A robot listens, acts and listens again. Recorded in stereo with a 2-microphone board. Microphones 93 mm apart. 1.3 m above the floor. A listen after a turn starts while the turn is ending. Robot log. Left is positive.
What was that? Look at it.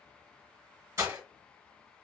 note: The breaking glass: about 30° right or 150° right.
cmd yaw -30
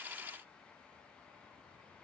cmd idle
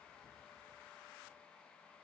end: I heard breaking glass, but can't make it out now. It was about straight ahead or 120° right.